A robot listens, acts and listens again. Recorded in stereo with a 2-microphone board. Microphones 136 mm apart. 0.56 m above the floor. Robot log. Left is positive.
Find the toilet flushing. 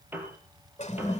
note: The toilet flushing: about 60° left or 120° left.
cmd yaw +60
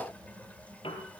cmd idle
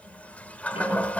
note: So it is at 10° left.
cmd yaw +10
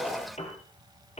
end: Facing the toilet flushing, 1 to 2 m away.